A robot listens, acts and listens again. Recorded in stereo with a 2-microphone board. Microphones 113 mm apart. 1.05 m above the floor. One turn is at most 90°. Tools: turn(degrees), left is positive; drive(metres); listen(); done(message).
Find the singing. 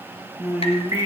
turn(degrees=-25)
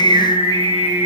turn(degrees=-35)
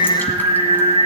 turn(degrees=-90)
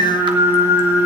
turn(degrees=-50)
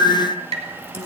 turn(degrees=-35)
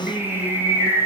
turn(degrees=-20)
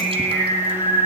done("Found it: singing, straight ahead, over 4 m away.")